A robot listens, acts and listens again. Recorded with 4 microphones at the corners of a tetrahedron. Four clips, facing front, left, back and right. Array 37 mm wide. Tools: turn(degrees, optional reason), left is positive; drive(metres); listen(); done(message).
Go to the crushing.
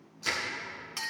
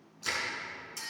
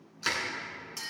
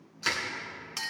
turn(degrees=-130, reason="The crushing: 130° right.")
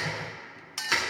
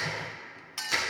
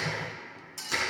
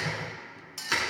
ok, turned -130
turn(degrees=-40, reason="The crushing is now 40° right.")
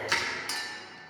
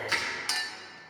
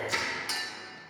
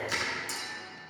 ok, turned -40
turn(degrees=20, reason="The crushing is now 20° left.")
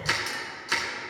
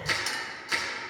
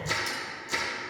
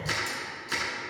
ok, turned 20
drive(metres=1.0)
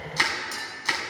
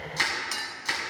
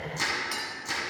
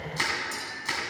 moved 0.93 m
drive(metres=1.0)
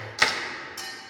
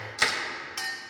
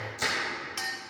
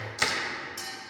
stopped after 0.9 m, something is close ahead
turn(degrees=10, reason="The crushing is now 10° left.")
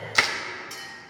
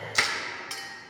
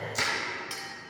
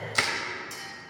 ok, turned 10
done("I am next to the crushing.")